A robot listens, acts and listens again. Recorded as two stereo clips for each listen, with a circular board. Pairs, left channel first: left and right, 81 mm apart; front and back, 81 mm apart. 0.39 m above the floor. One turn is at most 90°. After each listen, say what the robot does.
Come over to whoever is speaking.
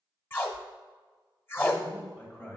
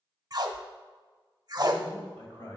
Turn 30° left.
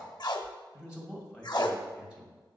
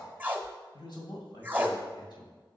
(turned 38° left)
Turn 10° right.
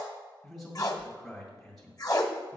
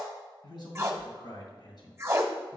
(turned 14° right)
Drive 1.0 m forward.
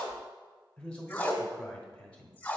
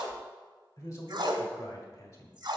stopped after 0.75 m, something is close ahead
Turn 20° left.
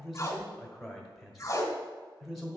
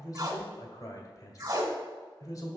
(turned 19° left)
Arrived at the man speaking, straight ahead.